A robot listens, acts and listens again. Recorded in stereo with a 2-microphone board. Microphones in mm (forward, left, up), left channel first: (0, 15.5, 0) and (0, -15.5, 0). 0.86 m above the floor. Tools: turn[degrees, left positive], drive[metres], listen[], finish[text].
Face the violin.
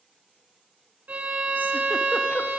Thought: The violin: about 60° right or 120° right.
Action: turn[-60]
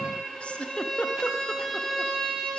Action: finish[Facing the violin, 2 to 4 m away.]